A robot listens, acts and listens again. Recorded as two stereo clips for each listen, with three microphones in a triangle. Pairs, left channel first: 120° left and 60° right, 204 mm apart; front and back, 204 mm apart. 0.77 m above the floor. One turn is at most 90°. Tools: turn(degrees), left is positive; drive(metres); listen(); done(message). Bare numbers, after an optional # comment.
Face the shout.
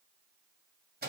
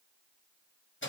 listen()
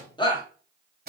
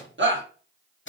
# The shout: 175° right.
turn(-90)
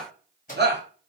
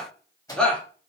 # The shout is now 85° right.
turn(-85)
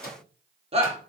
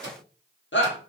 done("Found it: a shout, straight ahead, under 1 m away.")